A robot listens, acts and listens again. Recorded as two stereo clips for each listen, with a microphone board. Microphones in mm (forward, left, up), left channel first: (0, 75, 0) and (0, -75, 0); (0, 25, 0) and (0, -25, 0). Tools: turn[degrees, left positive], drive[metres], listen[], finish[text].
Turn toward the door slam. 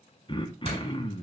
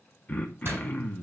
Thought: The door slam: about 45° right or 135° right.
Action: turn[-45]
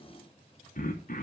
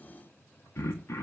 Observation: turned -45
Action: listen[]
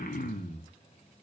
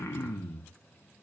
Action: finish[I heard a door slam, but can't make it out now. It was about straight ahead or 90° right.]